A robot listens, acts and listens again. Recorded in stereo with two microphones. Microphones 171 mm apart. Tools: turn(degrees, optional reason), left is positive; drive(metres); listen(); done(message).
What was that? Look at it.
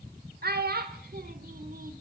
turn(degrees=-65, reason="The child speaking: about 65° right or 115° right.")
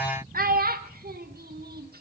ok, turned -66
turn(degrees=-65, reason="So it is at 65° right.")
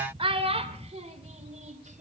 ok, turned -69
turn(degrees=-45, reason="The child speaking is now 45° right.")
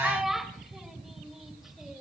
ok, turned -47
done("Facing the child speaking.")